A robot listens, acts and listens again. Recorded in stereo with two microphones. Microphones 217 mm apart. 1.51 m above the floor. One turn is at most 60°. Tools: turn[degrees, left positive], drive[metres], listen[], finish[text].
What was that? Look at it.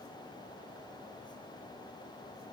Action: listen[]
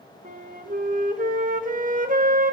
Thought: The flute: about 40° right or 140° right.
Action: turn[-40]
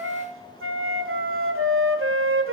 Thought: So it is at 95° right.
Action: turn[-60]
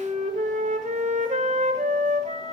Thought: The flute is now 35° right.
Action: turn[-35]
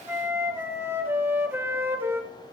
Thought: The flute is now 10° right.
Action: turn[-10]
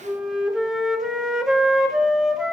Action: finish[Facing the flute.]